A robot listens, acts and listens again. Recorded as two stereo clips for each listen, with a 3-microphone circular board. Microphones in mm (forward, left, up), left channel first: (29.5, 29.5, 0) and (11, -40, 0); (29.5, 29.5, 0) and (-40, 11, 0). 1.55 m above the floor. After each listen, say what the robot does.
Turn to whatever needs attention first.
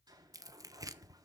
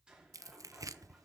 Keep listening.
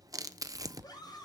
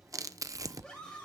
Turn 100° left.
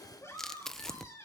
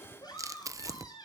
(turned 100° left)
Turn 30° left.
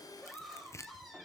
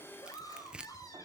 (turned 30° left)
Turn 10° right.
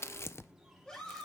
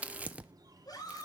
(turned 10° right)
Found it: a scream, straight ahead.